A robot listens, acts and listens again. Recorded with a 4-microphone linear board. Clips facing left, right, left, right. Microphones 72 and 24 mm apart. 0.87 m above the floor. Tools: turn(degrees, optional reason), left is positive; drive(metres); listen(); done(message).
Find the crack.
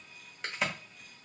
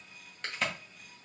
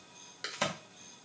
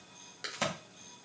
turn(degrees=30)
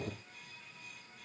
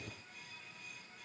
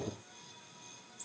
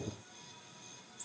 listen()
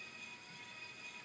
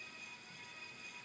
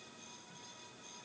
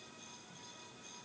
done("I heard a crack, but can't make it out now. It was about 25° right or 145° left.")